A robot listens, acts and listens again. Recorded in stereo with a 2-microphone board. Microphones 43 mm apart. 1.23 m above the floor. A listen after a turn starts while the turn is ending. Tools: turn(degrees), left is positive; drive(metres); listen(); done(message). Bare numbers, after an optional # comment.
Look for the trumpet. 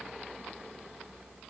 listen()
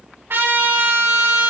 # The trumpet: about 70° right or 110° right.
turn(-70)
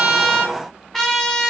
done("Found it: a trumpet, straight ahead.")